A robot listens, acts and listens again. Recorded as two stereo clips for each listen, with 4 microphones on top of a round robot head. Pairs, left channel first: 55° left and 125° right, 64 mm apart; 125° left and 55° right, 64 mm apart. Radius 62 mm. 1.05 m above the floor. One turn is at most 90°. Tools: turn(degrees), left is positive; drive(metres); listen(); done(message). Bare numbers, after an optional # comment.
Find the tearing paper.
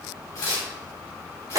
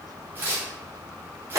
done("Facing the tearing paper, 2 to 4 m away.")